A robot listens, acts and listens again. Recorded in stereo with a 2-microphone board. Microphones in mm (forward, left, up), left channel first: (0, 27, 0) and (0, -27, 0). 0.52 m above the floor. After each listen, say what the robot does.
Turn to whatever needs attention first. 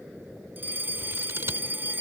Turn 40° right.
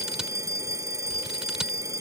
Turn 100° right.
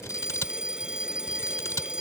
Turn 15° right.
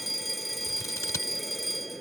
Found it: a fire alarm, straight ahead.